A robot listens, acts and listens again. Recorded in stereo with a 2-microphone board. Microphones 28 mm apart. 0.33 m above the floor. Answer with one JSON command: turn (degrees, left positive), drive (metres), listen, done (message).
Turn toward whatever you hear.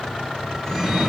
{"turn": 30}
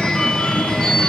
{"turn": 145}
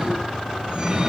{"turn": -35}
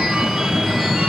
{"turn": -20}
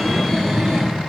{"done": "Facing the phone ringing, 2 to 4 m away."}